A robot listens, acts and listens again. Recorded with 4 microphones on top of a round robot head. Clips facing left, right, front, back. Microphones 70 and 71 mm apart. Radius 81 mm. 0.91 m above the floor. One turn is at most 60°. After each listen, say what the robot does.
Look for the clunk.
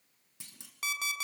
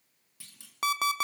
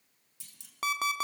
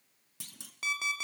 Turn 60° left.
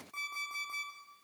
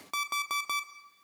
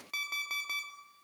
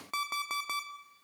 Turn 60° left.
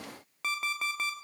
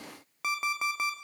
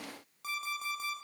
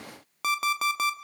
Turn 40° left.
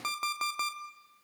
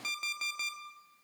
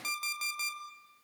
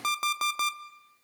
Facing where the clunk came from. I can't hear it now.